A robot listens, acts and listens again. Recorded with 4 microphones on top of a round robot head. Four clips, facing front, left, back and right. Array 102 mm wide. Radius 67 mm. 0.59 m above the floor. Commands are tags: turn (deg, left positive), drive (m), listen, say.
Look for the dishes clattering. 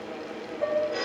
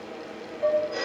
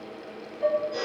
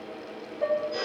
<turn deg="-40"/>
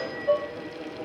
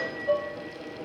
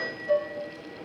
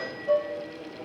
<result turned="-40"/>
<turn deg="10"/>
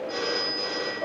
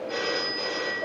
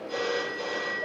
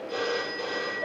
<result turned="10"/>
<say>Facing the dishes clattering, 2 to 4 m away.</say>